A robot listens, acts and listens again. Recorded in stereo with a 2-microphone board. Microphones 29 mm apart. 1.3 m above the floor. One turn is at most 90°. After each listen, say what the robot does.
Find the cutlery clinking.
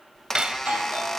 Turn 30° right.
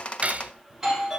Turn 90° right.
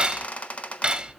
Turn 35° right.
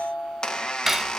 Turn 10° right.
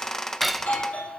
Facing the cutlery clinking, under 1 m away.